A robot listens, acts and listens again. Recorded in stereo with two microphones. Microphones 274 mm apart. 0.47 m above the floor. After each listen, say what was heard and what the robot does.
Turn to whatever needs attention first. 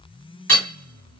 Keep listening.
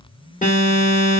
The alarm: about 25° left or 155° left. Turn 25° left.
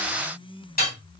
Keep listening.
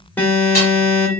Facing the alarm, 1 to 2 m away.